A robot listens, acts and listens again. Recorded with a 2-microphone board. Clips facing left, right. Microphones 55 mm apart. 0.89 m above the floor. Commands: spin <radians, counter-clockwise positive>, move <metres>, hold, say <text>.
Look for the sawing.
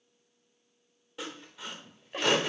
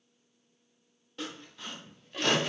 spin 0.52
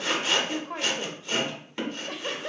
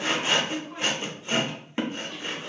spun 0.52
spin -0.35
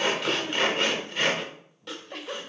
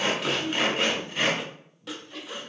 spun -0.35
say Facing the sawing, under 1 m away.